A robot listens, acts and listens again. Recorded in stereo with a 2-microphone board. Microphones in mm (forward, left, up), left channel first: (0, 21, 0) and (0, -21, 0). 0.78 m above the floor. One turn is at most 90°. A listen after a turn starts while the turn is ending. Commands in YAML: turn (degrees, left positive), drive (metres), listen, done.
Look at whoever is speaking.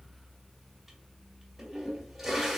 listen: true
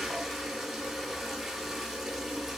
listen: true
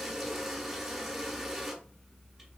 done: "I can't make out anyone speaking to turn to."